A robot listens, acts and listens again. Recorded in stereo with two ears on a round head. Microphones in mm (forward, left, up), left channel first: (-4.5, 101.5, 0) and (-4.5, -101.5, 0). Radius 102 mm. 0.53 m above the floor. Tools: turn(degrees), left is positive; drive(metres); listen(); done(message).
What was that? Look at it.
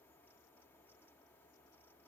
listen()
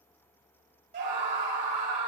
turn(degrees=-35)
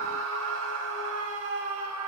turn(degrees=-110)
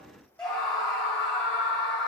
done("Found it: a scream, straight ahead.")